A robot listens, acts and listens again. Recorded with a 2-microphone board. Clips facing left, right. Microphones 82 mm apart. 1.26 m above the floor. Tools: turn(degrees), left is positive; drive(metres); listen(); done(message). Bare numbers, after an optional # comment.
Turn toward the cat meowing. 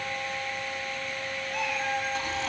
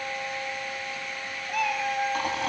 # The cat meowing: about 60° right or 120° right.
turn(-60)
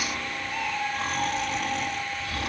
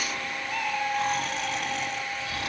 # So it is at 60° right.
turn(-60)
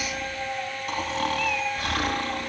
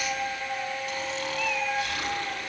done("Found it: a cat meowing, straight ahead, over 4 m away.")